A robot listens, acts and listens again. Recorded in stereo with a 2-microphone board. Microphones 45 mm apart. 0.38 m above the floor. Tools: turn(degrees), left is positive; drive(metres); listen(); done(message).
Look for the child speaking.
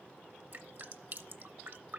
listen()
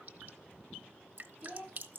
turn(degrees=-25)
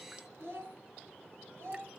turn(degrees=-120)
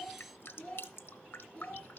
turn(degrees=30)
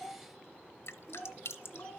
turn(degrees=15)
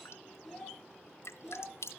done("Facing the child speaking, over 4 m away.")